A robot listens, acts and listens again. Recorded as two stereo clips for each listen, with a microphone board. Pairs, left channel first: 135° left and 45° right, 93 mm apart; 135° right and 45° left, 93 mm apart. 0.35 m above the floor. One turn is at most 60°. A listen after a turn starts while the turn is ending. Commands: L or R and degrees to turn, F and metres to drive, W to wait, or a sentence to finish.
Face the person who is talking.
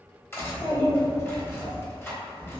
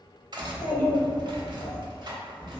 R60
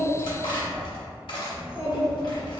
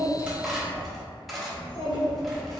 R60
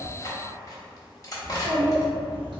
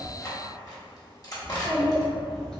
R55
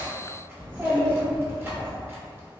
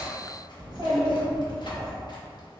L15
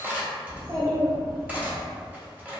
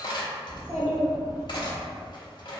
Found it: a child speaking, straight ahead.